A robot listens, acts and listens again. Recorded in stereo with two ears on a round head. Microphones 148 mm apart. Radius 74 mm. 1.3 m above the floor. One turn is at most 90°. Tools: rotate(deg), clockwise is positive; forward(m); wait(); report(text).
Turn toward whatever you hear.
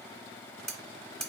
rotate(-30)
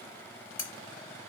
rotate(-90)
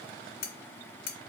rotate(-90)
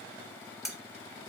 report("Found it: cutlery clinking, straight ahead, 1 to 2 m away.")